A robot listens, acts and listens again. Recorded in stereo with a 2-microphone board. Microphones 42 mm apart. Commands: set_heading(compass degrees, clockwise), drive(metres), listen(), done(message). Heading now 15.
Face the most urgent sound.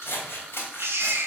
set_heading(85)
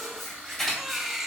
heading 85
done("Found it: a baby crying, straight ahead, under 1 m away.")